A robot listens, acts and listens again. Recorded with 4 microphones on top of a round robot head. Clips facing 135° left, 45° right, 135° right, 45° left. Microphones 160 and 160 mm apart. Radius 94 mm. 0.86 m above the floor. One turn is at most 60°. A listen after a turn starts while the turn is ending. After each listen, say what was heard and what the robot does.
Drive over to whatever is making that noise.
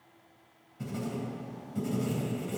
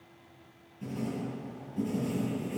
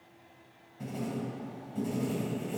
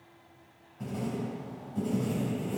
The writing: 145° left. Turn 60° left.
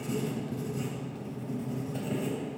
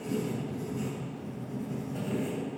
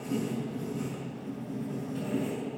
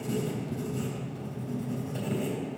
The writing is now 80° left. Turn 60° left.
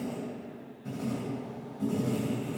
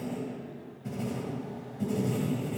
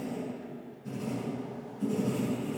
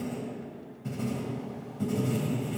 The writing is now 20° left. Turn 20° left.
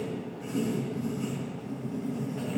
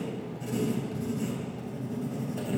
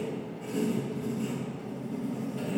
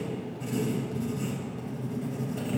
Drive 1.0 m forward.
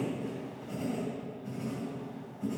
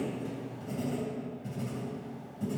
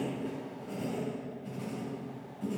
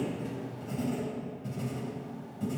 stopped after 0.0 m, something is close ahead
Something is in my way. I am facing the writing but have not reached it.